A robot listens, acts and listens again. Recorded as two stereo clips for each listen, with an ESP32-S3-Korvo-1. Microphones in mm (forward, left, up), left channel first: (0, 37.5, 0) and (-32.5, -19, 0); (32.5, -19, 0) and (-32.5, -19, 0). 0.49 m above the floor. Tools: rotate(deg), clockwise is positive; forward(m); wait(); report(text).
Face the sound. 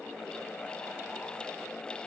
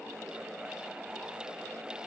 wait()
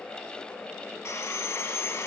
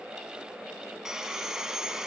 rotate(-100)
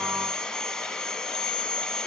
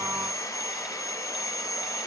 rotate(20)
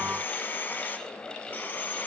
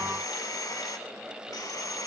report("Found it: sawing, straight ahead.")